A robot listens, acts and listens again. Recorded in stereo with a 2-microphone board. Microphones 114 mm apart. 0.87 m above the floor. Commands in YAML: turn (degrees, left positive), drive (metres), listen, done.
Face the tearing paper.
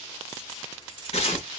turn: 60
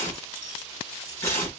turn: 25
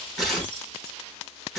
done: "Facing the tearing paper."